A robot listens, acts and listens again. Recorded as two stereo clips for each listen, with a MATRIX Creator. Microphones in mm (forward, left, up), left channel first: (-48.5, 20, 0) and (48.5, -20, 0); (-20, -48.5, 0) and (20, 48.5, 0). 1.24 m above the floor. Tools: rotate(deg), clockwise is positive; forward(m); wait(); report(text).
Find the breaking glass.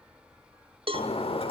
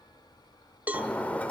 rotate(-170)
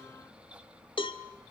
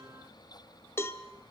report("Facing where the breaking glass came from. I can't hear it now.")